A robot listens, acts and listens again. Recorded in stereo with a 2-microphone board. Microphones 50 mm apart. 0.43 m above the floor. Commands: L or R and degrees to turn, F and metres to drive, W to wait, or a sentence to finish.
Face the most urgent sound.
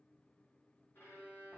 W
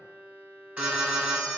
R30
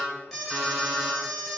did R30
Found it: an alarm, straight ahead, 1 to 2 m away.